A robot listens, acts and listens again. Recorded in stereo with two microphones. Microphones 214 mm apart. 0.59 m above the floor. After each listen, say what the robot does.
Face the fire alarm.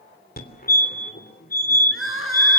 Turn 45° left.
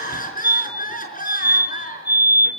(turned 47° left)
Turn 75° left.
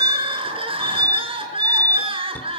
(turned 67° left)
Turn 10° left.
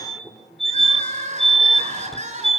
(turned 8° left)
Facing the fire alarm.